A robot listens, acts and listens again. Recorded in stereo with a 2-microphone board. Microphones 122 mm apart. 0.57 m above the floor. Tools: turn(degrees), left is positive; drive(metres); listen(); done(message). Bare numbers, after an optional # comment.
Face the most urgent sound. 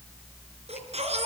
# The baby crying: about 60° right or 120° right.
turn(-60)
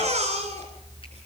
# So it is at 65° right.
turn(-65)
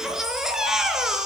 done("Found it: a baby crying, straight ahead.")